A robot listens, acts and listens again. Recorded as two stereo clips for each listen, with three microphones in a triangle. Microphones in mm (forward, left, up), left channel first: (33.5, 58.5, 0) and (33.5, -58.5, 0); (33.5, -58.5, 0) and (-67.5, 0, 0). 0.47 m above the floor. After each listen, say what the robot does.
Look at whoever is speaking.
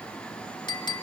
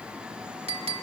Keep listening.
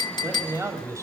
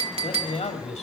Turn 30° right.
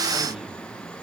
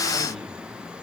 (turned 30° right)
Keep listening.
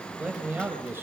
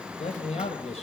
Turn 20° right.
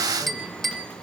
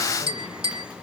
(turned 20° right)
Keep listening.
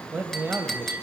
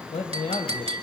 Turn 20° right.
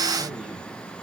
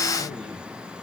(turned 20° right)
Keep listening.
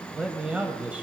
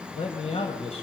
Turn 10° right.
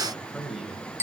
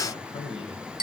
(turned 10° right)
Facing the man speaking.